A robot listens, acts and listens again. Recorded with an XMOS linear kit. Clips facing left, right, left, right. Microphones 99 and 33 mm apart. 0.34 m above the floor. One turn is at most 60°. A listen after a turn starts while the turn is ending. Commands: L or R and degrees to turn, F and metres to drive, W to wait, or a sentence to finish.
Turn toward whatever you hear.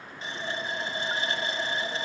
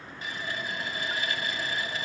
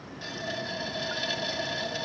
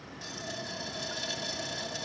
L30
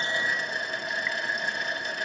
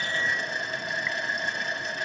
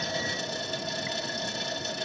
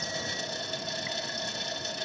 Facing the running tap, 1 to 2 m away.